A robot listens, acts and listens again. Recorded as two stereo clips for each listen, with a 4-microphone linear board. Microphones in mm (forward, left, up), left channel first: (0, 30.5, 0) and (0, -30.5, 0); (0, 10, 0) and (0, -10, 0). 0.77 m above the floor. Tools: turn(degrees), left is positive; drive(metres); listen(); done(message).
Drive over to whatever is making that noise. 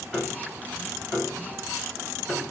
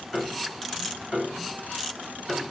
turn(degrees=30)
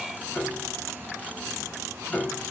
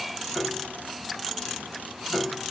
turn(degrees=150)
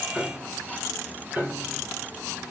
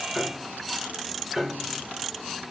turn(degrees=-25)
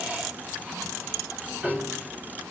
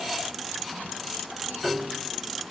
turn(degrees=-20)
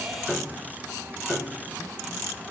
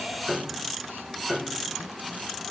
drive(metres=1.0)
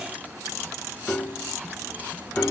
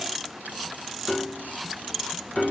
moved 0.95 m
turn(degrees=20)
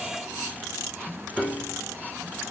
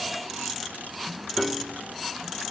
drive(metres=1.0)
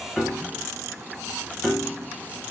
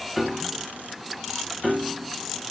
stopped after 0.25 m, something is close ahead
done("I am next to the piano.")